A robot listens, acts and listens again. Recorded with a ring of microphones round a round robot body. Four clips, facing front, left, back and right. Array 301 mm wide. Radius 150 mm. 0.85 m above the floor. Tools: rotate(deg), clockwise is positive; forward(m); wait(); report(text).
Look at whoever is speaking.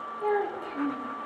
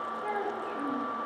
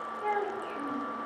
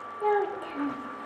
rotate(70)
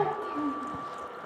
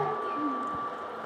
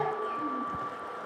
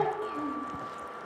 rotate(25)
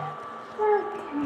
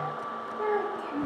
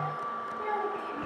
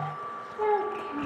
rotate(15)
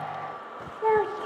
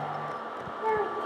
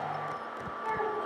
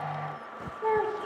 report("Facing the child speaking, 2 to 4 m away.")